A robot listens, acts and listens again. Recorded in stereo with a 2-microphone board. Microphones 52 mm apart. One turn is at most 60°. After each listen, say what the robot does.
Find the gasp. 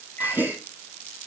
Turn 35° right.
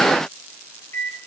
Keep listening.
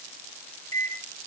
I heard a gasp, but can't make it out now. It was about straight ahead or 110° right.